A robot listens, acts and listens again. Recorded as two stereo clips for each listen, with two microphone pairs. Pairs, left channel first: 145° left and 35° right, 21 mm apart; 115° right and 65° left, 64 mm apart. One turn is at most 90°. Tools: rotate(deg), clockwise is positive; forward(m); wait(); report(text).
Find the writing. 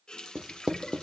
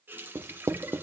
rotate(-25)
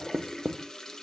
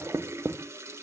rotate(-10)
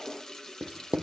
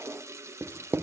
report("Found it: writing, straight ahead, under 1 m away.")